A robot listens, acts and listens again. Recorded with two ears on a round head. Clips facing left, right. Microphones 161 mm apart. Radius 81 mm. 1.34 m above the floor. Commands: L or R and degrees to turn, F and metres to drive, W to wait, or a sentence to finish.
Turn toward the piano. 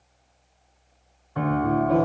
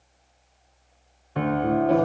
R30
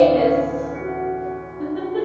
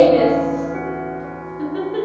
R120
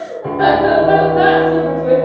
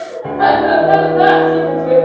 R15
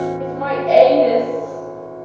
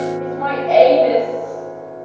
Found it: a piano, straight ahead.